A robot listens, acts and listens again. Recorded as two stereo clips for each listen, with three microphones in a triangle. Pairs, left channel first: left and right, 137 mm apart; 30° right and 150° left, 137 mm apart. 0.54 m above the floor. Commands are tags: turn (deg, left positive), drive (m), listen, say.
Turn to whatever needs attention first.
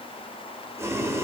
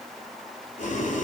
<listen/>
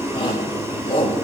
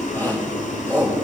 <turn deg="40"/>
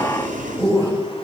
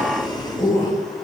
<turn deg="-25"/>
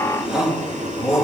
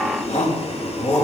<say>Facing the shout, 2 to 4 m away.</say>